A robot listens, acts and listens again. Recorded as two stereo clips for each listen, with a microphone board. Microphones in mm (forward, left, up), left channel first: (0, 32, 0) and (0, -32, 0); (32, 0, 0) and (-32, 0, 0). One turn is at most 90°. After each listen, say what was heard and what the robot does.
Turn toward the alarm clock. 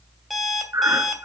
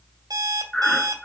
The alarm clock: straight behind. Turn 90° left.
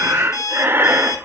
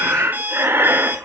The alarm clock is now 120° left. Turn 90° left.
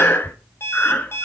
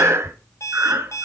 The alarm clock is now 40° left. Turn 40° left.
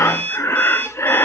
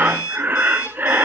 The alarm clock is now 20° left. Turn 20° left.
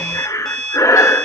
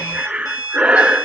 Facing the alarm clock.